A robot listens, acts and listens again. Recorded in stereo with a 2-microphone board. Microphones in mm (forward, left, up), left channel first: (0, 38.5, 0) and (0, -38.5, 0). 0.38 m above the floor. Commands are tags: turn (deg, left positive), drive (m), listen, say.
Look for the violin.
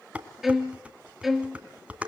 <turn deg="-30"/>
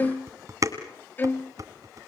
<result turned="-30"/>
<turn deg="25"/>
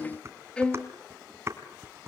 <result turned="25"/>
<turn deg="15"/>
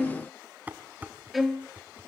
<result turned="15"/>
<say>Found it: a violin, straight ahead.</say>